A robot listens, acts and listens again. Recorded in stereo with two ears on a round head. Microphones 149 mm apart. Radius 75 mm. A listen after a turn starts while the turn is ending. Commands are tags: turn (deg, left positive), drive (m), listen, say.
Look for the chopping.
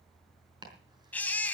<turn deg="-25"/>
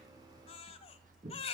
<turn deg="-125"/>
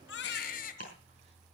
<listen/>
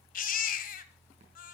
<listen/>
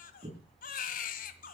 <turn deg="-40"/>
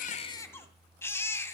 <listen/>
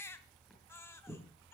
<say>Found it: chopping, straight ahead.</say>